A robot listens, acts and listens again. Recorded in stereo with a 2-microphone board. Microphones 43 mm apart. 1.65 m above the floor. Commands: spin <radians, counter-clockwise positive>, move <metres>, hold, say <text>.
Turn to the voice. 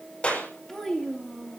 spin 0.35
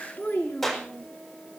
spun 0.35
spin 2.27
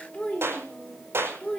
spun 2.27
spin 0.44
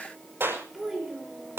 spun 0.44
say Found it: a child speaking, straight ahead.